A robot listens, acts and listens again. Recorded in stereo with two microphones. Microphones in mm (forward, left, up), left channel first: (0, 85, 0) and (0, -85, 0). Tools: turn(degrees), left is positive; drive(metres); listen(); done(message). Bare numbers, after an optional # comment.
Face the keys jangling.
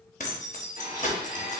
# The keys jangling: about 50° left or 130° left.
turn(50)
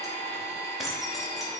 done("Facing the keys jangling, under 1 m away.")